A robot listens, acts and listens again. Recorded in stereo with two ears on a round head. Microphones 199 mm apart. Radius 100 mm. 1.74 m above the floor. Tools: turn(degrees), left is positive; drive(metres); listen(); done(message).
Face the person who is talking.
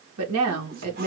turn(degrees=-90)
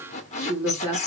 done("Found it: a woman speaking, straight ahead, 2 to 4 m away.")